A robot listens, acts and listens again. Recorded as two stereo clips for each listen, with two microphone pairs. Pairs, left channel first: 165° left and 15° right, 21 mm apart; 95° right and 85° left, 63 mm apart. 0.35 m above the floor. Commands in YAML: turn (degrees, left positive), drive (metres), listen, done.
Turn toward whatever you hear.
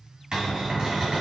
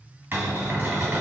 turn: 35
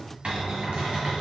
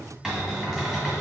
done: "Facing the cupboard door."